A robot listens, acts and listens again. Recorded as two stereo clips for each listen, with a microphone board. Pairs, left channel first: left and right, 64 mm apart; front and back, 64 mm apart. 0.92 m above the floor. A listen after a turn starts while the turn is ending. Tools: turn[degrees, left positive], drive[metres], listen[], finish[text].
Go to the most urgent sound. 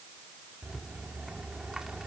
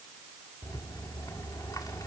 Action: listen[]
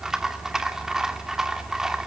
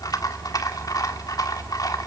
Action: listen[]
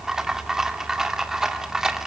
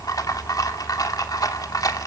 Action: finish[I can't make out anything urgent to turn to.]